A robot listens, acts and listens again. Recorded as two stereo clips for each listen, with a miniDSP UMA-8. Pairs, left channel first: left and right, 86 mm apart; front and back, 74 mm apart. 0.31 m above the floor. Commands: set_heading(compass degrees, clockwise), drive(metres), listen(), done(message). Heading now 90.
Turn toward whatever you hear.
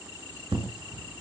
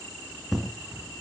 set_heading(180)
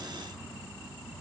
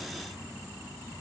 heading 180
done("Facing where the explosion came from. I can't hear it now.")